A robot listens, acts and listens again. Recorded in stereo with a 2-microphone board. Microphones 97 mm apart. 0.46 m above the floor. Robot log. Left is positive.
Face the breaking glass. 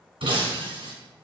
note: The breaking glass: about 65° right or 115° right.
cmd yaw -65
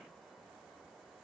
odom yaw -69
cmd idle
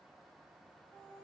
end: I heard breaking glass, but can't make it out now. It was about 5° left or 45° right.